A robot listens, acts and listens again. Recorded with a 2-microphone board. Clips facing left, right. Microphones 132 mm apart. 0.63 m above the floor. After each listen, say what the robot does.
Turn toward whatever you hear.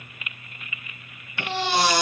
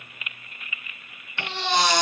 Turn 30° left.
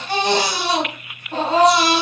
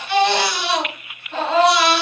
Turn 140° left.
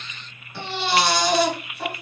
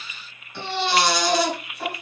Found it: a baby crying, straight ahead, 2 to 4 m away.